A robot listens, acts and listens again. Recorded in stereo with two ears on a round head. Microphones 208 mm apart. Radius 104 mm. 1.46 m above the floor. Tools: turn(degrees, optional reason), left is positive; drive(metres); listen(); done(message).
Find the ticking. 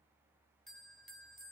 listen()
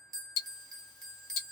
turn(degrees=65, reason="The ticking: about 65° left or 115° left.")
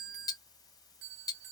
turn(degrees=15, reason="So it is at 15° left.")
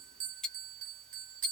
done("Found it: ticking, straight ahead.")